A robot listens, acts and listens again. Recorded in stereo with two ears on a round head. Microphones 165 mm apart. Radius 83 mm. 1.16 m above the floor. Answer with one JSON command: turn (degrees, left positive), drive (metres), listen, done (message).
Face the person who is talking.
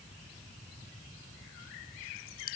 {"listen": true}
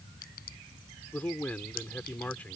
{"turn": 30}
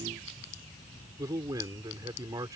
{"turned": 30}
{"turn": -20}
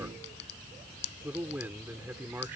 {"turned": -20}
{"turn": -10}
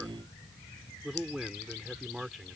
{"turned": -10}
{"done": "Found it: a man speaking, straight ahead."}